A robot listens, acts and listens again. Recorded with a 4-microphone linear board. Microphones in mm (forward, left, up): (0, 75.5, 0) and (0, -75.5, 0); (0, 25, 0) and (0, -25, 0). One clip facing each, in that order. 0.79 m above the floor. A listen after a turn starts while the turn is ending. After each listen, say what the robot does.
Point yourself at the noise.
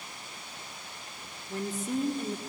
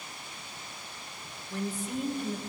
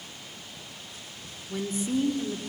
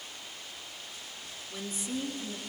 Turn 45° left.
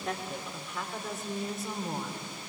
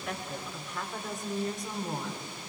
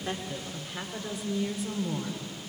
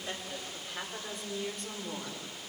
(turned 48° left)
Found it: a woman speaking, straight ahead.